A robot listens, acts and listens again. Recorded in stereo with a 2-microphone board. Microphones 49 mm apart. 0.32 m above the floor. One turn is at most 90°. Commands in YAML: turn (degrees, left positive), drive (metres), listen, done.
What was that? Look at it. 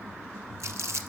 turn: -70
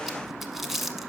done: "Found it: crumpling, straight ahead."